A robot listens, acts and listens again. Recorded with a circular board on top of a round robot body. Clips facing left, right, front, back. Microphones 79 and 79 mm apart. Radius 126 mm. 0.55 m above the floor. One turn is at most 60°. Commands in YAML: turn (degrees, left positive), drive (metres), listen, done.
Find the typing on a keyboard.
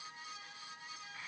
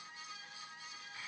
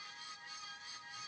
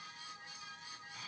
listen: true
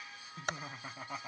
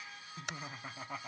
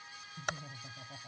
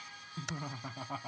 turn: 40
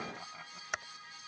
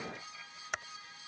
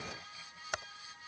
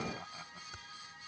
done: "Found it: typing on a keyboard, straight ahead."